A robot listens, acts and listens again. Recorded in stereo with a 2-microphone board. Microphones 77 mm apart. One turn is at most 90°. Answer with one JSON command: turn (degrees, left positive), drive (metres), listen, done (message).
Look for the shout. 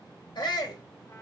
{"turn": 70}
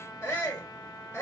{"turn": 30}
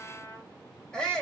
{"turn": 10}
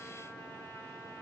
{"listen": true}
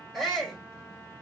{"done": "Facing the shout, 1 to 2 m away."}